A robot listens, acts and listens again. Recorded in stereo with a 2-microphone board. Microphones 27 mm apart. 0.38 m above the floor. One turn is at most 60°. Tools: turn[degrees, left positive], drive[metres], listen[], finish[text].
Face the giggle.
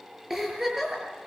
Action: turn[-30]
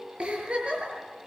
Thought: So it is at 140° right.
Action: turn[-60]
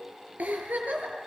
Thought: The giggle is now 105° right.
Action: turn[-60]
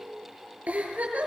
Thought: The giggle is now 65° right.
Action: turn[-60]
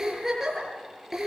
Thought: The giggle is now 15° right.
Action: turn[-15]
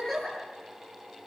Action: finish[Facing the giggle, over 4 m away.]